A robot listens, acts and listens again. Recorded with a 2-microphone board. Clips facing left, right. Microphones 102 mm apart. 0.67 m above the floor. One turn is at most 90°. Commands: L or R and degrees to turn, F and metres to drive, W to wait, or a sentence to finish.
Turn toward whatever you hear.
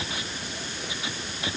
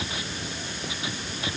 W
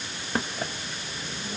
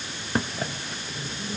W
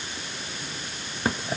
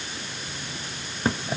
I can't make out anything.